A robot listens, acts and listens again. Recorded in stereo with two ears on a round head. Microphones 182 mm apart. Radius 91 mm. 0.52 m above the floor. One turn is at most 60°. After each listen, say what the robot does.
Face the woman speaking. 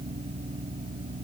Keep listening.
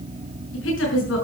Turn 60° left.
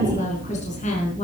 Turn 35° left.
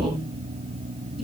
Found it: a woman speaking, straight ahead.